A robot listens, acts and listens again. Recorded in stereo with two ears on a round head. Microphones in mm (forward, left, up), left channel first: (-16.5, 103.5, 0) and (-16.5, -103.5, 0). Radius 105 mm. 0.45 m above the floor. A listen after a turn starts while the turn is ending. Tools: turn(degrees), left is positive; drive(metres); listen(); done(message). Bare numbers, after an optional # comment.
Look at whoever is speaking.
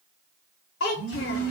# The child speaking: about 55° left or 125° left.
turn(55)
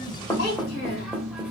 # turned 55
# So it is at 55° left.
turn(55)
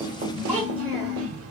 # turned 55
done("Facing the child speaking, under 1 m away.")